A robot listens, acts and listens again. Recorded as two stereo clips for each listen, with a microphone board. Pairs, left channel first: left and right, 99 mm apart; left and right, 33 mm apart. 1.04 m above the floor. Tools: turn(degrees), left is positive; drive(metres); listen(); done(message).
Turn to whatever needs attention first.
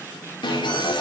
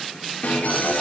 turn(degrees=55)
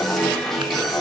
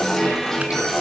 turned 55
done("Found it: an alarm, straight ahead.")